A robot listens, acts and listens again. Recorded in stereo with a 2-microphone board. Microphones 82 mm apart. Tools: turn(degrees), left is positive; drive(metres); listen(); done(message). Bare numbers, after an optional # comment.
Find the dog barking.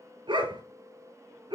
turn(-90)
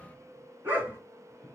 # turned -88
# So it is at 25° right.
turn(-25)
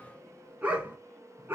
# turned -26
# The dog barking is now 25° right.
turn(-25)
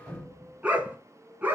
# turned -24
# The dog barking is now 20° right.
turn(-20)
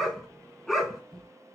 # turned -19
done("Facing the dog barking, 1 to 2 m away.")